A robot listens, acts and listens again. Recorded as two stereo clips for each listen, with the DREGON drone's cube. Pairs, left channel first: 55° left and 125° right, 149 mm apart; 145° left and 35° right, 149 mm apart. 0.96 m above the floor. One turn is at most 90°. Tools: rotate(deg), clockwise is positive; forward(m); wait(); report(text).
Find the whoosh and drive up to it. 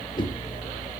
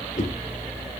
rotate(-90)
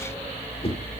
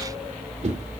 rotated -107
forward(1.0)
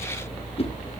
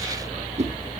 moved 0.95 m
rotate(-10)
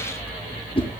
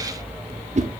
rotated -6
forward(1.0)
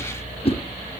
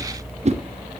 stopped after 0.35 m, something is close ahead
report("Arrived at the whoosh, straight ahead.")